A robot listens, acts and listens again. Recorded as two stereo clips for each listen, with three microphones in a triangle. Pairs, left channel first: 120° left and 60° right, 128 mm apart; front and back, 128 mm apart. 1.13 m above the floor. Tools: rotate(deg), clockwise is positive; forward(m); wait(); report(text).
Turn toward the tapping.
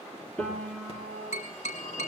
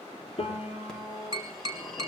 rotate(-125)
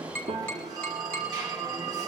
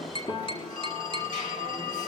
rotate(-40)
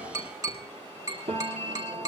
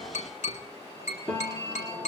report("Facing the tapping, over 4 m away.")